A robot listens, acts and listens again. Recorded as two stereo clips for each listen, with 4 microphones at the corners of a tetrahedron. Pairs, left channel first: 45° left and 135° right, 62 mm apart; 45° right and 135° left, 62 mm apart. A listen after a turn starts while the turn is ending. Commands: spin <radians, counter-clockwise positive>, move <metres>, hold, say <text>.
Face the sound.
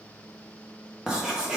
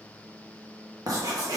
spin 2.53
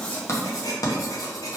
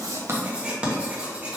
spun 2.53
spin 1.05
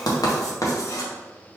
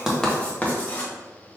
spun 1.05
spin 0.35
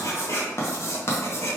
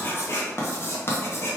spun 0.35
say Facing the writing, under 1 m away.